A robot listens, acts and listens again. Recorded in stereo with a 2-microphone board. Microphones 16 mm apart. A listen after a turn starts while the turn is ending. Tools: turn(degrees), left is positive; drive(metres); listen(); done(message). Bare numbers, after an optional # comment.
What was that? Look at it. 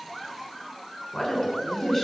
turn(30)
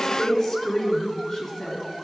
# So it is at 160° left.
turn(160)
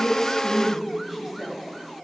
done("Facing the woman speaking, 2 to 4 m away.")